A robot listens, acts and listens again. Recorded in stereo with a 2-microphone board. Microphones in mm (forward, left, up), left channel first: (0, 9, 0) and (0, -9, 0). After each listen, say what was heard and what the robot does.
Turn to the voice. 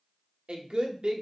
The woman speaking: about 65° right or 115° right. Turn 65° right.
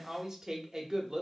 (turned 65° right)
So it is at 30° right. Turn 30° right.
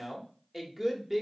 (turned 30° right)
Found it: a woman speaking, straight ahead.